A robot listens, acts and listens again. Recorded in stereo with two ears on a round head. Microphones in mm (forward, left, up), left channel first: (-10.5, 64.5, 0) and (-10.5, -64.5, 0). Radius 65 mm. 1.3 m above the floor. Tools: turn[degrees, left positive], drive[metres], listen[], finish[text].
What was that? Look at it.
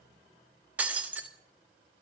Action: turn[-30]
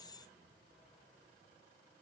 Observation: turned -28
Action: listen[]
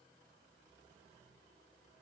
Action: finish[I heard breaking glass, but can't make it out now. It was about 20° left or 140° right.]